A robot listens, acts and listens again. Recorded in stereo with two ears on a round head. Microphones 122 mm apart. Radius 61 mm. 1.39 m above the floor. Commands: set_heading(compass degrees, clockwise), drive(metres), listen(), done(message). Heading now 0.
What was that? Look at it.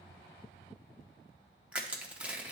set_heading(30)
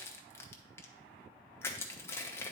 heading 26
set_heading(6)
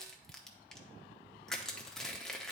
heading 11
done("Facing the crushing, under 1 m away.")